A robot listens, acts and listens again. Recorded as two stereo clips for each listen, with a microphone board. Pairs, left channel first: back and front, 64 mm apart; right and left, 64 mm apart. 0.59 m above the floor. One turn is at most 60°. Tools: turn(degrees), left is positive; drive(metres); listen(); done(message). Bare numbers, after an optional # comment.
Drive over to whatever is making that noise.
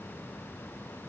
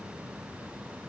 listen()
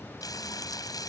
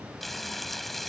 # The frying: straight behind.
turn(60)
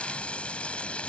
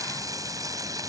# The frying is now 110° left.
turn(60)
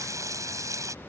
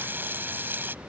# The frying is now 30° left.
turn(30)
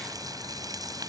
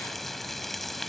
drive(1.0)
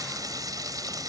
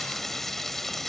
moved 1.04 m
drive(1.0)
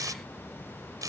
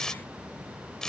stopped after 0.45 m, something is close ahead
# The frying is now 10° right.
turn(-10)
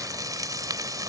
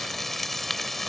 done("Something is in my way. I am facing the frying but have not reached it.")